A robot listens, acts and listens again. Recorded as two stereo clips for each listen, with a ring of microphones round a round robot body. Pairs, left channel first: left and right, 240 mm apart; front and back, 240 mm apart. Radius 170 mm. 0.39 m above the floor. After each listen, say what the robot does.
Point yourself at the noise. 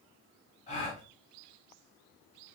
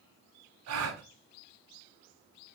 Turn 160° left.
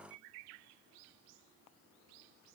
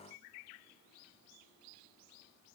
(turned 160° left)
I heard a gasp from this way, but can't make it out now.